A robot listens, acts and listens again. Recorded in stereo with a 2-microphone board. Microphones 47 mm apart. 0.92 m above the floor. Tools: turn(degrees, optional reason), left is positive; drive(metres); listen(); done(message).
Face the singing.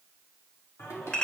turn(degrees=75, reason="The singing: about 75° left or 105° left.")
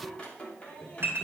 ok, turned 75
turn(degrees=30, reason="So it is at 30° left.")
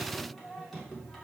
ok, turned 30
turn(degrees=10, reason="The singing is now 10° left.")
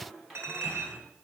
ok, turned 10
done("Facing the singing, 2 to 4 m away.")